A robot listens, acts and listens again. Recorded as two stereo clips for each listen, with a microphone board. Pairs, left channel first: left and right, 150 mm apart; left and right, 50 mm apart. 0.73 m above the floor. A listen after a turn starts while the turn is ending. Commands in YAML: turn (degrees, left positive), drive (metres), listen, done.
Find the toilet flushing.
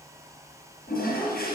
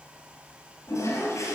turn: 65
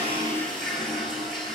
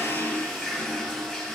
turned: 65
done: "Found it: a toilet flushing, straight ahead."